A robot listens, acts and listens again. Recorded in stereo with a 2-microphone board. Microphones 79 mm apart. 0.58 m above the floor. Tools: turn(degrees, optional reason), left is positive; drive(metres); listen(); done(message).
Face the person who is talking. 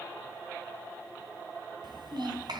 turn(degrees=-90)
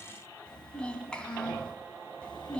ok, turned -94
turn(degrees=15, reason="So it is at 15° left.")
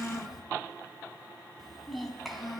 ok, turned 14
done("Found it: a child speaking, straight ahead, 2 to 4 m away.")